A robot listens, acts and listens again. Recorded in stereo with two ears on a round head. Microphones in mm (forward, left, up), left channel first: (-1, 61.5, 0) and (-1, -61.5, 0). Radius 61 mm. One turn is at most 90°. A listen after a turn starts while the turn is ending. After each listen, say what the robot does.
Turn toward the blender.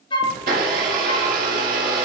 Turn 70° right.
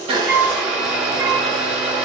Found it: a blender, straight ahead.